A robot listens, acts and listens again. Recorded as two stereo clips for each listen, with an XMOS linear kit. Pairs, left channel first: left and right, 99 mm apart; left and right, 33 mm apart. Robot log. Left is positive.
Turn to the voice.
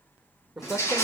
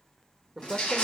cmd yaw +30
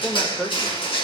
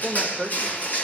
note: So it is at 150° left.
cmd yaw +150
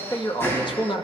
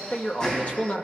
note: The man speaking is now 55° left.
cmd yaw +55
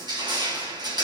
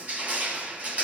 cmd idle
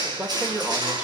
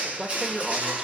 note: The man speaking is now 15° right.
cmd yaw -15
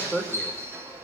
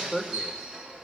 end: Facing the man speaking, 2 to 4 m away.